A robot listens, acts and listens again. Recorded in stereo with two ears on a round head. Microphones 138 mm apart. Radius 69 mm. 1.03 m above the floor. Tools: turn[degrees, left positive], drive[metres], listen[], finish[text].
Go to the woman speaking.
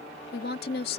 Thought: The woman speaking: about 70° left or 110° left.
Action: turn[70]
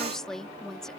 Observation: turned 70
Action: drive[1.0]
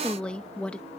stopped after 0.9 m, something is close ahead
Action: finish[I am next to the woman speaking.]